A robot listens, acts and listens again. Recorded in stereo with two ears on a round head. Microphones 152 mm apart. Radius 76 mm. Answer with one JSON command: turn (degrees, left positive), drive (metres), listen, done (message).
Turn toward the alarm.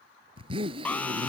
{"turn": 30}
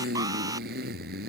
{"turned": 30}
{"listen": true}
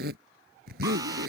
{"listen": true}
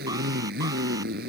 {"done": "I heard an alarm, but can't make it out now. It was about 20° right or 140° left."}